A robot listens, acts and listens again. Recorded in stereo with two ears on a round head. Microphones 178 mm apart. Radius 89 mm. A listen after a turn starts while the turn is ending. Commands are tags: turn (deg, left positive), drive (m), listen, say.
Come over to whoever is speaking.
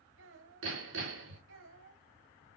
<turn deg="-70"/>
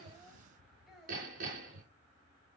<drive m="1.0"/>
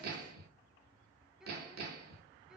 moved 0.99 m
<drive m="1.0"/>
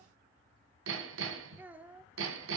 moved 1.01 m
<turn deg="-10"/>
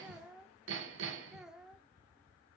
<drive m="1.0"/>
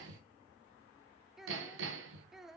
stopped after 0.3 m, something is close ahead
<say>Arrived at the child speaking, straight ahead.</say>